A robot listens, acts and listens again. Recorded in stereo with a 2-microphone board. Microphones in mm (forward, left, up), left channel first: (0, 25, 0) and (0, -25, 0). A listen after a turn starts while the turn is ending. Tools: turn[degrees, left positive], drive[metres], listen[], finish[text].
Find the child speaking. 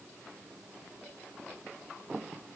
Action: listen[]
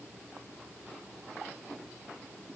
Action: listen[]
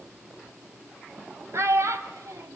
Thought: The child speaking: about 65° right or 115° right.
Action: turn[-65]
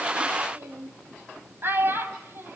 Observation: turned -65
Thought: So it is at 45° right.
Action: turn[-45]
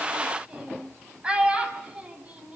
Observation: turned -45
Thought: The child speaking is now 20° right.
Action: turn[-20]
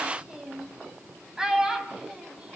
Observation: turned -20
Thought: The child speaking is now 10° right.
Action: turn[-10]
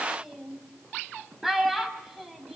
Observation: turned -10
Action: finish[Facing the child speaking, 2 to 4 m away.]